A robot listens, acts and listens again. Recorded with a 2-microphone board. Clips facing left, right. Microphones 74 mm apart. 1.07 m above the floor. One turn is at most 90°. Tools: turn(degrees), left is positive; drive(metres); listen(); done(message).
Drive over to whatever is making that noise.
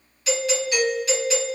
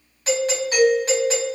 turn(degrees=-40)
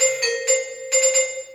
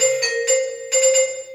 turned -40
drive(metres=1.0)
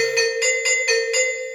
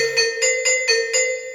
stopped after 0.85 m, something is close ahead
done("Arrived at the doorbell, straight ahead.")